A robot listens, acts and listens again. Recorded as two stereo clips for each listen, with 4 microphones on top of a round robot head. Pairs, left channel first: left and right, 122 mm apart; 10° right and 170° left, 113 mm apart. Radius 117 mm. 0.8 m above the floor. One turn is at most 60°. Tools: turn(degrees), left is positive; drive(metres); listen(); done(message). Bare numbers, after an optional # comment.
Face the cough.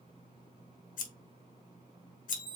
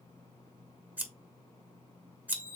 listen()
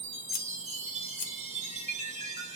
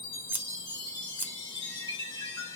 listen()
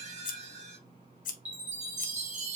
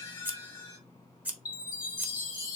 done("I can't make out a cough, only scissors and a chime.")